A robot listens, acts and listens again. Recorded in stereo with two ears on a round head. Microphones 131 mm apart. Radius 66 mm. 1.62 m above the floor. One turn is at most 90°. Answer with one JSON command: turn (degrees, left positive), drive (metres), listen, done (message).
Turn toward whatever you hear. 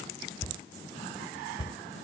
{"turn": 25}
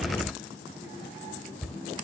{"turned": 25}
{"done": "Found it: a cupboard door, straight ahead."}